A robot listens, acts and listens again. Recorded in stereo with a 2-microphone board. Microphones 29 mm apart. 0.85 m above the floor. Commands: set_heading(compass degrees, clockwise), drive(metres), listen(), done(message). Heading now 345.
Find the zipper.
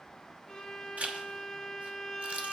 set_heading(40)
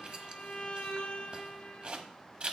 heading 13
set_heading(63)
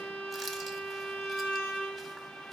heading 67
listen()
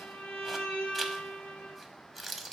done("Found it: a zipper, straight ahead, 1 to 2 m away.")